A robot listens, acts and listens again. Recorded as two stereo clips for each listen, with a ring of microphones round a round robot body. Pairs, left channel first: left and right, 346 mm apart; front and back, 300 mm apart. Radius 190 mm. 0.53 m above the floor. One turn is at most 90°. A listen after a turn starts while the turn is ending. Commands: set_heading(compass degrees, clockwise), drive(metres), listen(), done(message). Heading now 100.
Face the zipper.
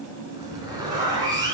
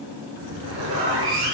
set_heading(190)
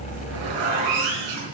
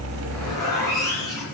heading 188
set_heading(268)
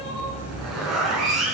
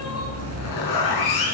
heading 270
done("Found it: a zipper, straight ahead, over 4 m away.")